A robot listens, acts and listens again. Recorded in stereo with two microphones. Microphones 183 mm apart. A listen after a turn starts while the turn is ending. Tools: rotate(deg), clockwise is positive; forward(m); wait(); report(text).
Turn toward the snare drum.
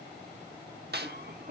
rotate(65)
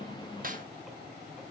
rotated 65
wait()
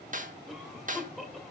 rotate(50)
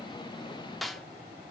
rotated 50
report("Facing the snare drum.")